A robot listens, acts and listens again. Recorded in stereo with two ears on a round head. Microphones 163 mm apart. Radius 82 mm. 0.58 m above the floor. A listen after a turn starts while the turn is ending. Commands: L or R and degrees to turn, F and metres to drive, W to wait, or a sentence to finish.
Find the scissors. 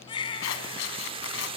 L90
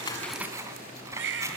R15
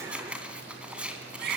Found it: scissors, straight ahead.